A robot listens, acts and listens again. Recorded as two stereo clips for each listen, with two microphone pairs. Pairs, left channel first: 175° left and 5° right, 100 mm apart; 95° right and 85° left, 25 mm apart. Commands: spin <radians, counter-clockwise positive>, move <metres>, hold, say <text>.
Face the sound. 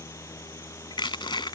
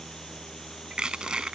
spin 2.44
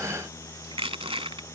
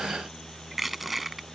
say Found it: crushing, straight ahead.